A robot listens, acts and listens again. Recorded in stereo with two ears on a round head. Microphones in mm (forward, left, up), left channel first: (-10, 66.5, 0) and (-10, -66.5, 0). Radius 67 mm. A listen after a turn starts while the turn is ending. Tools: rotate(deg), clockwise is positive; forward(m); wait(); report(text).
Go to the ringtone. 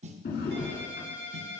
rotate(90)
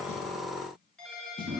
forward(1.0)
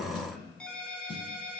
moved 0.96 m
forward(1.0)
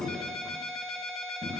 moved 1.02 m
forward(1.0)
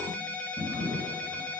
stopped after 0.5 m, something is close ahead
rotate(-10)
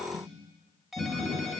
report("Arrived at the ringtone, straight ahead.")